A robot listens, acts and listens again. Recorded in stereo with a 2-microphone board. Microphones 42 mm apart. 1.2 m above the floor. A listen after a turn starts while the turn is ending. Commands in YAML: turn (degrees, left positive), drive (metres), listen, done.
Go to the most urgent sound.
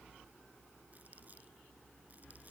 listen: true
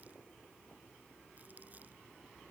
listen: true
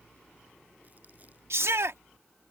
turn: -90
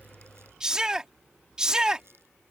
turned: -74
turn: -15
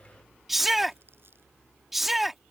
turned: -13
drive: 1.0
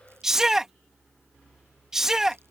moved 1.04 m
turn: -10
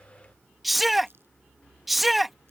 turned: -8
drive: 1.0
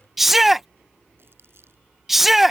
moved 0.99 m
drive: 1.0
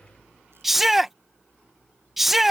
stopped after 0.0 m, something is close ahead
done: "I am next to the shout."